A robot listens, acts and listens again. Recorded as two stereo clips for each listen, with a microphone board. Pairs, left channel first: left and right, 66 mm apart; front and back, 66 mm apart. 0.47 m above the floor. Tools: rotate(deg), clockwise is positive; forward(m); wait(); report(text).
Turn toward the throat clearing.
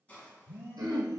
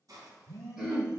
rotate(95)
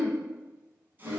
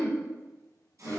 rotate(45)
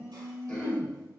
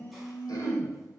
rotate(-15)
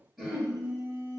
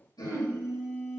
report("Facing the throat clearing, 1 to 2 m away.")